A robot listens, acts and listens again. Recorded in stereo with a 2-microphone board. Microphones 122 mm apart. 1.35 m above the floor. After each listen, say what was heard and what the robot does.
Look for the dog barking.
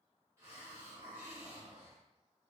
Keep listening.
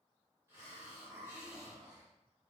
Keep listening.
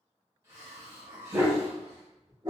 The dog barking: about 35° right or 145° right. Turn 35° right.
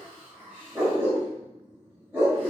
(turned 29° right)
So it is at 15° right. Turn 15° right.
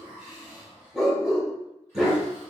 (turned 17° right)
Facing the dog barking.